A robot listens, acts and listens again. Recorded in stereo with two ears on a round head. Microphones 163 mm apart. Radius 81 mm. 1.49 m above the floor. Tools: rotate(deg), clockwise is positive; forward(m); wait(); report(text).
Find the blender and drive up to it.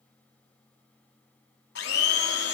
rotate(-60)
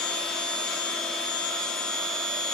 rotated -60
forward(1.0)
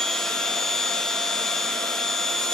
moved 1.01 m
forward(1.0)
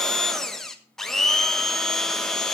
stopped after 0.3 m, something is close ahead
report("Arrived at the blender, straight ahead.")